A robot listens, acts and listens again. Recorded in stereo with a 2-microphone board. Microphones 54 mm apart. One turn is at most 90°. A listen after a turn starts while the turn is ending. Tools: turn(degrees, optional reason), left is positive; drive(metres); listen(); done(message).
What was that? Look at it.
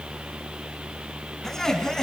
turn(degrees=30)
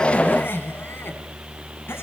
turn(degrees=90, reason="So it is at 135° left.")
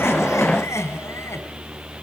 turn(degrees=65, reason="The laughter is now 65° left.")
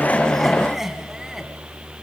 turn(degrees=-10, reason="The laughter is now 10° right.")
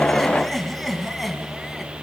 done("Facing the laughter.")